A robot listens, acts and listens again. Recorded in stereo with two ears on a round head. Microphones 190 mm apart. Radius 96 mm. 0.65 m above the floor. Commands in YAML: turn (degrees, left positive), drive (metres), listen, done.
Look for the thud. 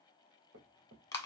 turn: -55
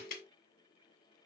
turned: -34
listen: true
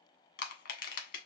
done: "I heard a thud, but can't make it out now. It was about 20° right or 90° right."